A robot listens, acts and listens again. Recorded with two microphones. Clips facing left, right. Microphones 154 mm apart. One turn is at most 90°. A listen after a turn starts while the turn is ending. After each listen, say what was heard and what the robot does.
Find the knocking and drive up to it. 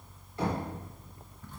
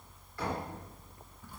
The knocking: about 25° left or 155° left. Turn 25° left.
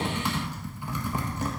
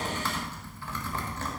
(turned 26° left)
Keep listening.
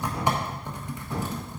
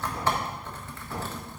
Keep listening.
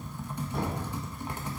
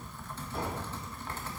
Drive 1.0 m forward.
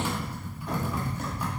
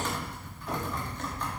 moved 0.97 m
Keep listening.
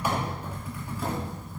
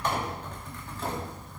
Keep listening.
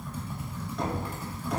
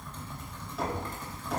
Drive 1.0 m forward.
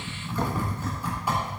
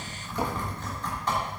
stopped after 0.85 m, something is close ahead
Keep listening.
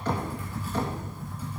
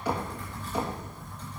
The knocking is now 10° right. Turn 10° right.
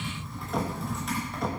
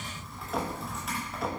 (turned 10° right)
Arrived at the knocking, straight ahead.